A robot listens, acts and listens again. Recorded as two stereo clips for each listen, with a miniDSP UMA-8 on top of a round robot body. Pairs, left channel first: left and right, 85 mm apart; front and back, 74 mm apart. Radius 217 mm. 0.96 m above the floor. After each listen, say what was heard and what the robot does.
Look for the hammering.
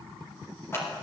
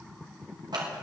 Keep listening.
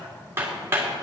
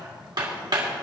The hammering: 150° right. Turn 150° right.
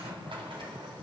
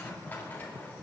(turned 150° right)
Keep listening.
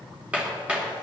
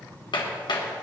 The hammering is now 10° right. Turn 10° right.
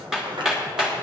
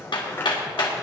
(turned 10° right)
Facing the hammering, 2 to 4 m away.